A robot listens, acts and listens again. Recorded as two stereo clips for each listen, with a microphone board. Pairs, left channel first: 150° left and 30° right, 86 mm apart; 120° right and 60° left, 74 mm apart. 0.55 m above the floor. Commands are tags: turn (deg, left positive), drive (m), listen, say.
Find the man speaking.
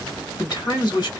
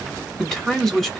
<turn deg="155"/>
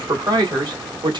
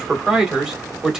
<turn deg="-20"/>
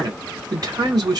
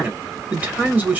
<say>Facing the man speaking, 1 to 2 m away.</say>